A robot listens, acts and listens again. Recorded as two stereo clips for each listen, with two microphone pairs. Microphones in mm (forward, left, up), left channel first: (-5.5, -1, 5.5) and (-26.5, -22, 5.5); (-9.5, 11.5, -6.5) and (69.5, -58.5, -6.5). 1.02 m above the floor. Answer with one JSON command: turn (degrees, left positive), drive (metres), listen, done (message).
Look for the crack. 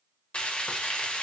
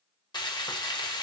{"listen": true}
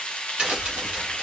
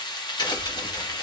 {"turn": 180}
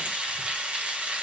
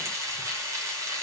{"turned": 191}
{"turn": -15}
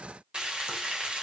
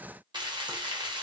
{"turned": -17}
{"done": "I heard a crack from this way, but can't make it out now."}